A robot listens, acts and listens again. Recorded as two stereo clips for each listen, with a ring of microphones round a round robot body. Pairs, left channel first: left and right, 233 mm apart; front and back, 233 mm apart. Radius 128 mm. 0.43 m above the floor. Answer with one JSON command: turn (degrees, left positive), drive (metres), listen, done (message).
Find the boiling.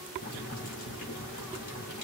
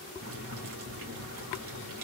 {"turn": 145}
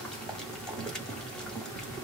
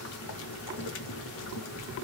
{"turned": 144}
{"done": "Facing the boiling, 2 to 4 m away."}